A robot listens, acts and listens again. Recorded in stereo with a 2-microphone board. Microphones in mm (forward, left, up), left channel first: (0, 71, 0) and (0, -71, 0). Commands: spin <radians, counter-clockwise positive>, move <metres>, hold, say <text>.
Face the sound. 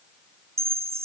spin -0.79
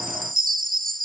spin -1.57
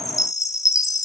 spin 0.35
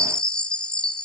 say Found it: a chime, straight ahead, under 1 m away.